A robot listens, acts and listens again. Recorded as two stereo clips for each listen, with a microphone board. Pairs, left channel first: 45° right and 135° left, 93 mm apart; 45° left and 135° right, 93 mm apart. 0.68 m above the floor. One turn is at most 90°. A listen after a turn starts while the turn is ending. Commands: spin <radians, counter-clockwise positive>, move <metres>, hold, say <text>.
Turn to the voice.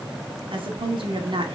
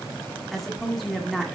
spin 1.57
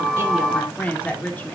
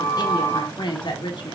spin 0.44
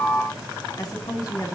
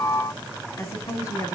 say Found it: a woman speaking, straight ahead, 1 to 2 m away.